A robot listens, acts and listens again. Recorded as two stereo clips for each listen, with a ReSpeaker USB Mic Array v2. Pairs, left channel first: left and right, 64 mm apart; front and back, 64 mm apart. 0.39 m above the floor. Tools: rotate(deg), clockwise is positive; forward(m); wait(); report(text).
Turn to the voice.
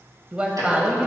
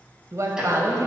rotate(160)
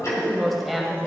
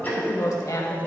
report("Found it: a woman speaking, straight ahead, 1 to 2 m away.")